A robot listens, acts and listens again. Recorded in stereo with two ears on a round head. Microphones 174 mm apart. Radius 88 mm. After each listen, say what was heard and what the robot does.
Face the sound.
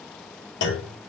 The clunk: about 60° left or 120° left. Turn 60° left.
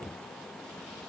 Keep listening.
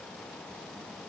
I heard a clunk, but can't make it out now. It was about straight ahead or 60° left.